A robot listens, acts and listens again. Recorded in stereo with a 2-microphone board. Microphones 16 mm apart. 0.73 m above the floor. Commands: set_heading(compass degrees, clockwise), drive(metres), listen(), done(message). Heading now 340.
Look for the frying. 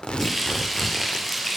set_heading(310)
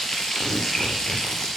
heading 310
set_heading(170)
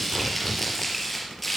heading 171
done("Facing the frying, over 4 m away.")